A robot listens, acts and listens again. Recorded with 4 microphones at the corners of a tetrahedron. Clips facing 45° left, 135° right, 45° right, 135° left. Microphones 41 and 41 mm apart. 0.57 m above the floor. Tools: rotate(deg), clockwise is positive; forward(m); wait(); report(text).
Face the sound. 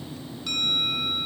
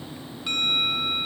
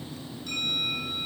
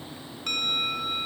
rotate(-155)
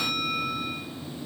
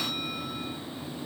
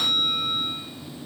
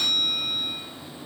rotate(-20)
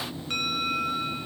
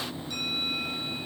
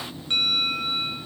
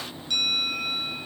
rotate(-10)
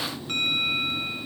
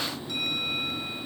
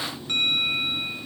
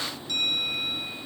report("Found it: a bell, straight ahead, 1 to 2 m away.")